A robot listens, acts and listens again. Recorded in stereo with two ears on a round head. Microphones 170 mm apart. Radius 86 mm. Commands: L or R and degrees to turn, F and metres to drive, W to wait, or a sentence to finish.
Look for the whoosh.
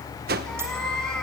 R50
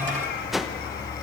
Found it: a whoosh, straight ahead, 1 to 2 m away.